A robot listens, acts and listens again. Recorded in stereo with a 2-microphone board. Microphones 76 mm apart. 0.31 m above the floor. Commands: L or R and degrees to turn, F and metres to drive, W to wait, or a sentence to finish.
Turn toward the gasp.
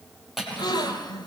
L70
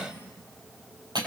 W
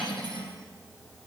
I heard a gasp, but can't make it out now. It was about straight ahead or 40° left.